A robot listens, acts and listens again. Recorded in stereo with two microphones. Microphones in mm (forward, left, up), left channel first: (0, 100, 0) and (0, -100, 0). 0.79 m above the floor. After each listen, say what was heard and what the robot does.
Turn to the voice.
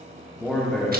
Turn 30° left.
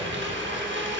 Keep listening.
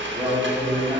So it is at 25° right. Turn 25° right.
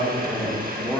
Found it: a man speaking, straight ahead, 1 to 2 m away.